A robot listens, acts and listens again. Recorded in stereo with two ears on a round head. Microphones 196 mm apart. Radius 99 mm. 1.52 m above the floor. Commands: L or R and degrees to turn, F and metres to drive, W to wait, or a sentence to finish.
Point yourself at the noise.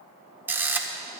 R30
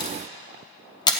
L20
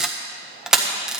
Found it: a camera shutter, straight ahead.